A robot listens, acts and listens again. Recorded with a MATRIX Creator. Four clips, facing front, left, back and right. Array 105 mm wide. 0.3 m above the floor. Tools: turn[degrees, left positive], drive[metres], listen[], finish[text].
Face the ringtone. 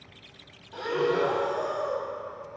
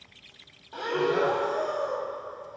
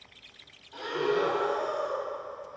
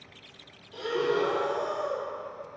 Action: listen[]
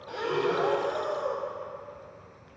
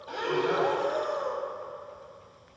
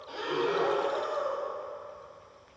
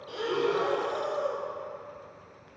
Action: listen[]
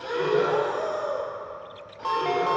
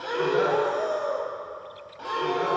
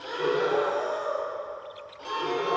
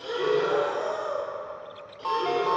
Thought: The ringtone: 30° right.
Action: turn[-30]
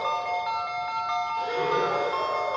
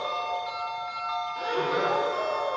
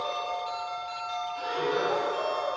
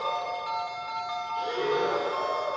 Action: finish[Found it: a ringtone, straight ahead.]